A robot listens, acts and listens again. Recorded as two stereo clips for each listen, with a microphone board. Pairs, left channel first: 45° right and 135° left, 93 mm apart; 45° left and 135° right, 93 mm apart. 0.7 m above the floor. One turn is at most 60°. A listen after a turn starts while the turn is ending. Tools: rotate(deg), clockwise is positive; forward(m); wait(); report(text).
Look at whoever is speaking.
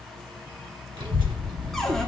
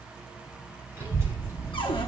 rotate(-60)
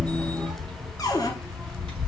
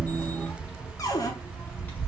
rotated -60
rotate(-60)
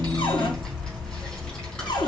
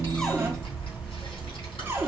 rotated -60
rotate(-35)
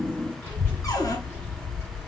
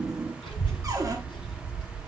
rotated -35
rotate(-20)
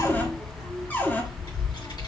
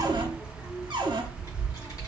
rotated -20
report("Facing the child speaking, over 4 m away.")